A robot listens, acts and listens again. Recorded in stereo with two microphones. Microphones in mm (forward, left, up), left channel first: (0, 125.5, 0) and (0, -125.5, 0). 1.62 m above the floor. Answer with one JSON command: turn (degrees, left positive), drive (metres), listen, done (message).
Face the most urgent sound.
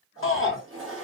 {"turn": 60}
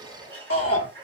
{"turn": 65}
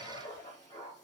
{"listen": true}
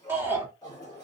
{"turn": -10}
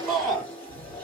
{"done": "Found it: a shout, straight ahead, 1 to 2 m away."}